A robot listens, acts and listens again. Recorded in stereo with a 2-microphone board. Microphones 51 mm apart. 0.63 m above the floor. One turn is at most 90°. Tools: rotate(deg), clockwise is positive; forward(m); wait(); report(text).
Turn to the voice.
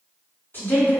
rotate(-35)
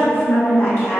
rotate(-90)
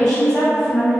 rotate(-10)
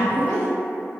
report("Facing the woman speaking.")